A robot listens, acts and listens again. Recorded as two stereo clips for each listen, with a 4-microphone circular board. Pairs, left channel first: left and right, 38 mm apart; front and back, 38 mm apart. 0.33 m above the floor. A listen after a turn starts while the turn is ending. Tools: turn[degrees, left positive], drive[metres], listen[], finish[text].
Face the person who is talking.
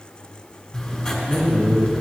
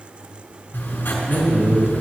Thought: The man speaking: 145° left.
Action: turn[145]
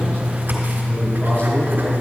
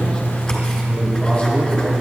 Action: listen[]
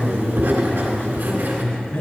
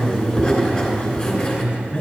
Thought: The man speaking is now 60° left.
Action: turn[60]
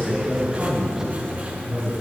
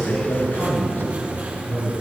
Action: finish[Found it: a man speaking, straight ahead, 2 to 4 m away.]